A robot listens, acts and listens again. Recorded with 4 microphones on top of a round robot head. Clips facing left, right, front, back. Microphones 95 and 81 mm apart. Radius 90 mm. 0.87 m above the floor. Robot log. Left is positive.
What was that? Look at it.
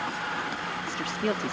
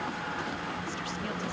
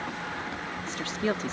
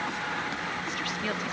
note: The woman speaking: 55° left.
cmd yaw +55
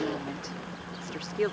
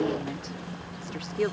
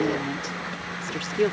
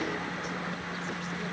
end: Facing the woman speaking.